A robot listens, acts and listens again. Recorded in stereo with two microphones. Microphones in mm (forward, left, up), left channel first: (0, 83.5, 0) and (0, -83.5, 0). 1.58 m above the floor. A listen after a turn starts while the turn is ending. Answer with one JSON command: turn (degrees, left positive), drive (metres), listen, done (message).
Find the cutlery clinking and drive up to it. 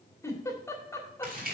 {"listen": true}
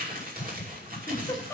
{"listen": true}
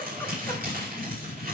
{"done": "I can't make out cutlery clinking to turn to."}